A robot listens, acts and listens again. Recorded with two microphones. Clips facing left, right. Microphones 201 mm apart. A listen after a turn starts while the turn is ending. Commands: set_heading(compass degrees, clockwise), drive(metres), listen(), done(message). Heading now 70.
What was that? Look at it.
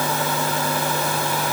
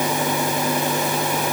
listen()
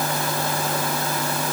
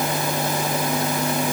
listen()
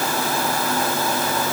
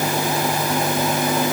done("I can't make out anything to turn to.")